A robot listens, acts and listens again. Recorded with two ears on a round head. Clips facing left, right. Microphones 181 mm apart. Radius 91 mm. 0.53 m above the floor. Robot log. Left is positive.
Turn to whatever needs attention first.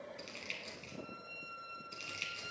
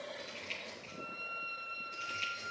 cmd idle
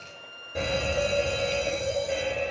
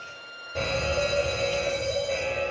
note: The fire alarm: about 15° left or 165° left.
cmd yaw +15
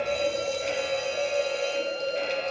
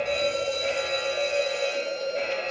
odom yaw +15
end: Facing the fire alarm, 2 to 4 m away.